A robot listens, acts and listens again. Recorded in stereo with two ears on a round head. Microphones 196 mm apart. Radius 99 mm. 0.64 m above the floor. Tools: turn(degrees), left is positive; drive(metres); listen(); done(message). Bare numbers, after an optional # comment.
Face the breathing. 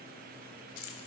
listen()
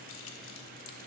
listen()
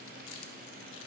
done("I can't make out breathing, only keys jangling.")